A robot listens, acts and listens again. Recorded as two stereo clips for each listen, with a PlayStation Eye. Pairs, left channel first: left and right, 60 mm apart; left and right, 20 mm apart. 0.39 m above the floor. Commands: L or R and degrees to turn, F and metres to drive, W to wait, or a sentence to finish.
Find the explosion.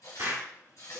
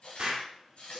R55
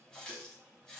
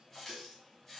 W
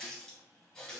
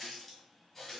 I heard an explosion, but can't make it out now. It was about straight ahead or 70° right.